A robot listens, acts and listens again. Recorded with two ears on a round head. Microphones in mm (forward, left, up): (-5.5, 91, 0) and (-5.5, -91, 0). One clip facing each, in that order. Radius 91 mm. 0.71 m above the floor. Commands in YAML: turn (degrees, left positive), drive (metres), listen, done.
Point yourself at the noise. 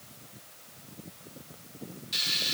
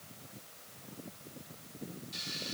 turn: 90
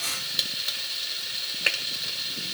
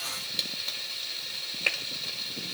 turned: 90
turn: 10
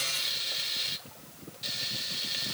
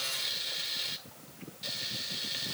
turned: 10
done: "Facing the frying."